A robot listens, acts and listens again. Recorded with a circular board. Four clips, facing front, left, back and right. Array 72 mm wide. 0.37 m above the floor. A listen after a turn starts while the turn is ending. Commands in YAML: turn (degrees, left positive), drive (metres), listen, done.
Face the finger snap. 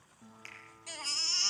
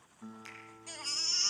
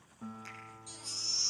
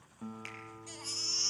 turn: -65
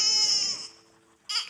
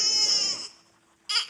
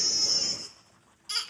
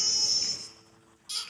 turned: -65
listen: true
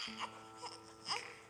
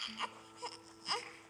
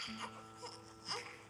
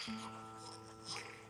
listen: true
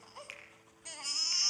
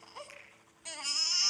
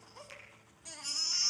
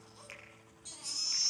done: "Facing the finger snap."